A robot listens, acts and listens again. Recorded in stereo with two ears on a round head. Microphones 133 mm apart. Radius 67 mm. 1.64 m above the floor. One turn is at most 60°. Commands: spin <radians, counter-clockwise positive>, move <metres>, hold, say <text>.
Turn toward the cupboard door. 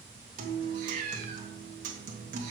hold
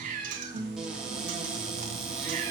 spin -0.52
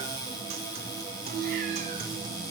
spin 0.35
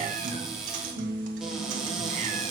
say Found it: a cupboard door, straight ahead.